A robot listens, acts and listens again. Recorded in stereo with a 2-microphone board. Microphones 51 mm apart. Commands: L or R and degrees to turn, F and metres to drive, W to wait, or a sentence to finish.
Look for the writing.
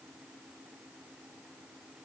W
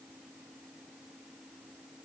W
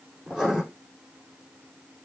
R30
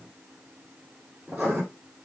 R145
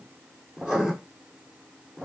R10
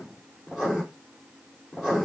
Facing the writing, 2 to 4 m away.